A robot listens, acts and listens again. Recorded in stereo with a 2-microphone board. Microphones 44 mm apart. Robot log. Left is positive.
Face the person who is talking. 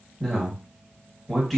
cmd yaw +30
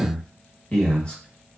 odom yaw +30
note: So it is at 150° left.
cmd yaw +150
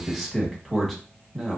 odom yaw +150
end: Found it: a man speaking, straight ahead, 1 to 2 m away.